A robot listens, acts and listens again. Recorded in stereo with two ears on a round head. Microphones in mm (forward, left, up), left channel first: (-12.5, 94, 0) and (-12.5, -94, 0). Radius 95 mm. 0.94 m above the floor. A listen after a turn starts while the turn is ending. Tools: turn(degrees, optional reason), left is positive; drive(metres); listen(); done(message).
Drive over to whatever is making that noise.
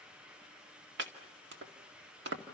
turn(degrees=-60, reason="The chopping: about 60° right or 120° right.")
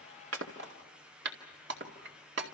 turn(degrees=-55, reason="So it is at 55° right.")
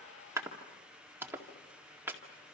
turn(degrees=-10, reason="The chopping is now 10° right.")
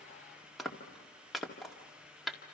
drive(metres=1.0)
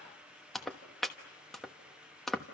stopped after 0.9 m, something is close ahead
done("I am next to the chopping.")